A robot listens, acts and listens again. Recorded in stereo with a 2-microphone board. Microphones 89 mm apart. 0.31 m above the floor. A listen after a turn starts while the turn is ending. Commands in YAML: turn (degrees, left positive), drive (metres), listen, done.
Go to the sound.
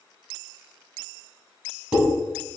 turn: -30
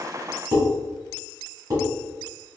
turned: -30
turn: -130
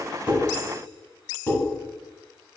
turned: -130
turn: 25
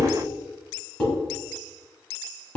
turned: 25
turn: 15
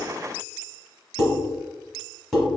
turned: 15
drive: 1.0
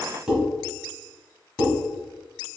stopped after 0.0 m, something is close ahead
done: "Blocked. The dishes clattering is further on, straight ahead."